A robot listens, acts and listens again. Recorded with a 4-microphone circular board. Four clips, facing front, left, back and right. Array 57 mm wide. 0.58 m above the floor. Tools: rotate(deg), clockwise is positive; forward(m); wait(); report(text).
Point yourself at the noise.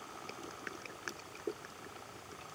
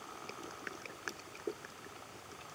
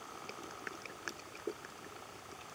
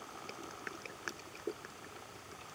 wait()
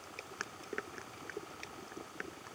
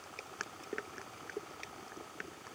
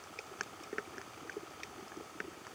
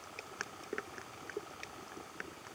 wait()
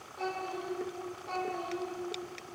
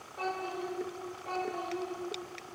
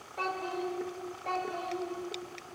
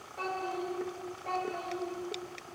rotate(165)
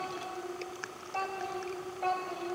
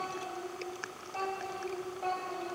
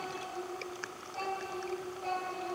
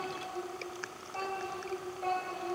report("Facing the child speaking, 2 to 4 m away.")